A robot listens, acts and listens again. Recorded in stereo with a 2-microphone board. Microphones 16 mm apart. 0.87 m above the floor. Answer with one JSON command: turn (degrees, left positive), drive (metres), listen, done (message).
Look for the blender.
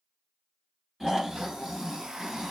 {"turn": -90}
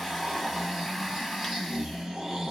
{"done": "Found it: a blender, straight ahead, under 1 m away."}